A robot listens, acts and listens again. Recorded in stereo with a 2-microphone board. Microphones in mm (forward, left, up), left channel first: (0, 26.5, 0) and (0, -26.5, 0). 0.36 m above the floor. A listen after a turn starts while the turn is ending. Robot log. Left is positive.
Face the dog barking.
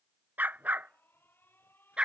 note: The dog barking: about 20° right or 160° right.
cmd yaw -20
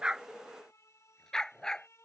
note: So it is at 15° left.
cmd yaw +15
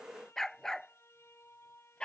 note: The dog barking is now 15° left.
cmd yaw +15
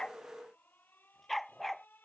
end: Found it: a dog barking, straight ahead.